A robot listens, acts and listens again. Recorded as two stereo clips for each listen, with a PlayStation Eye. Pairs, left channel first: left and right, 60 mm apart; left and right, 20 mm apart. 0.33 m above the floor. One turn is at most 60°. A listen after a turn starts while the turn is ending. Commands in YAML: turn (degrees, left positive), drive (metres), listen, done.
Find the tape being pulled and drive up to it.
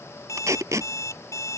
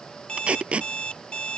turn: -60
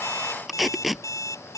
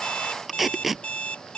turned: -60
drive: 1.0
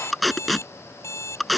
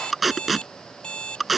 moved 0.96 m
drive: 1.0
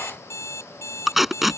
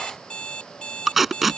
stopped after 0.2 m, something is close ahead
done: "Arrived at the tape being pulled, straight ahead."